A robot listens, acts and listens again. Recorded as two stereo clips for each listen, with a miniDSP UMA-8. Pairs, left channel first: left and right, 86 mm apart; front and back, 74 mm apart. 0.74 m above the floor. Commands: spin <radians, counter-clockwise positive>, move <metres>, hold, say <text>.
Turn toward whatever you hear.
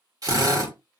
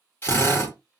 spin -0.87
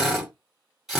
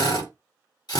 say Found it: a drill, straight ahead.